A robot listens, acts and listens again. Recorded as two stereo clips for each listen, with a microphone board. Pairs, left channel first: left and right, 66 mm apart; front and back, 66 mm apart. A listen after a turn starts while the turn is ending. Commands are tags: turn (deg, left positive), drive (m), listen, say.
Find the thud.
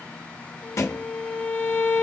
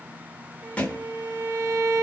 <turn deg="65"/>
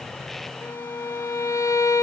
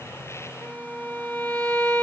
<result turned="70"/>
<say>I heard a thud from this way, but can't make it out now.</say>